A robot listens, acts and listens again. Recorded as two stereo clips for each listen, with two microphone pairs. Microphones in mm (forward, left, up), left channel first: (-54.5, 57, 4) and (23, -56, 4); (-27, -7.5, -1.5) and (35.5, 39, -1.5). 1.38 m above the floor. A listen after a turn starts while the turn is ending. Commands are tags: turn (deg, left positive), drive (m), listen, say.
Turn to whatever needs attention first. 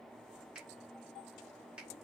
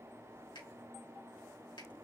<listen/>
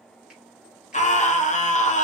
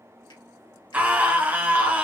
<turn deg="105"/>
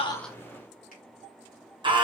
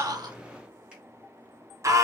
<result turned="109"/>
<say>Facing the scream.</say>